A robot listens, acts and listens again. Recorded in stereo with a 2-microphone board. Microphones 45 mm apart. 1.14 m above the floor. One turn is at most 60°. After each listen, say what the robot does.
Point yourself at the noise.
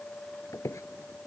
Turn 60° left.
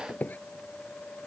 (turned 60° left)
Turn 35° left.
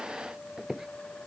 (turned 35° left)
Turn 10° right.
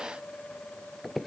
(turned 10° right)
Found it: a squeak, straight ahead.